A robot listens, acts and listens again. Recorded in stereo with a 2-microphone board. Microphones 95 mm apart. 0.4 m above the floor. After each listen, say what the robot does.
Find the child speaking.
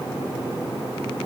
Keep listening.
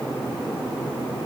Keep listening.
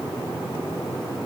I can't make out a child speaking.